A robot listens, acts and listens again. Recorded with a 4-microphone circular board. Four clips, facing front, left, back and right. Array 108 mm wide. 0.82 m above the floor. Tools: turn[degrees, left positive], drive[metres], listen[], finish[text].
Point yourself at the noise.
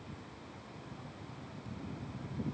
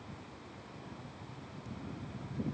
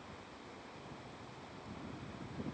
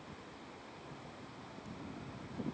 Action: listen[]
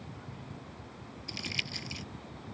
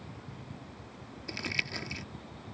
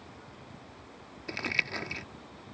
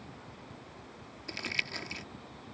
Thought: The crumpling: straight behind.
Action: turn[180]
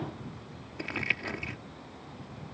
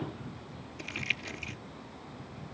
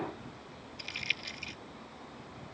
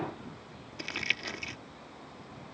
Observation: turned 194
Thought: The crumpling is now 15° right.
Action: turn[-15]
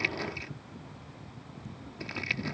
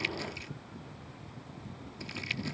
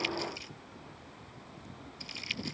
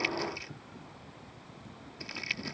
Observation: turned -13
Action: finish[Facing the crumpling.]